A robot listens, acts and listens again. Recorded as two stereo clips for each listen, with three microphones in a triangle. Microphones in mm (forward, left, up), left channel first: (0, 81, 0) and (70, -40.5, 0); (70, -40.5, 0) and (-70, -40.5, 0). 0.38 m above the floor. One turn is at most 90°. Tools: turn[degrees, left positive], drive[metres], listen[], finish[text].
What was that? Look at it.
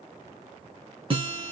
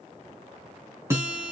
Thought: The guitar: 110° right.
Action: turn[-90]
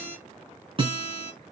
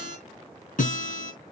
Thought: The guitar is now 10° right.
Action: turn[-10]
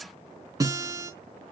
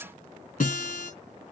Action: finish[Found it: a guitar, straight ahead, over 4 m away.]